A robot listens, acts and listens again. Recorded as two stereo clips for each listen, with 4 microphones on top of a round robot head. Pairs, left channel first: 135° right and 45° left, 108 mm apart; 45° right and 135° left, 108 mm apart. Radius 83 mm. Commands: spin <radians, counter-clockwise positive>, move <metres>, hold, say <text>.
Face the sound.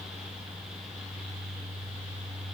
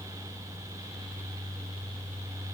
hold
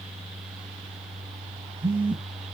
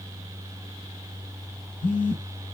spin -0.44
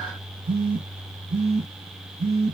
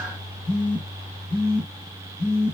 say Facing the phone buzzing, 2 to 4 m away.